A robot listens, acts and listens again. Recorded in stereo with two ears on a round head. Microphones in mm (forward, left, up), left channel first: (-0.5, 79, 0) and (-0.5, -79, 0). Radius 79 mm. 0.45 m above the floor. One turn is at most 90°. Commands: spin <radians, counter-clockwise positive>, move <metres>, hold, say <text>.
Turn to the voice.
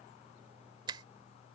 hold
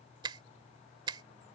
hold
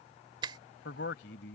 spin 1.22
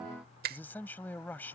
spin 0.17
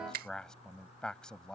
say Found it: a man speaking, straight ahead.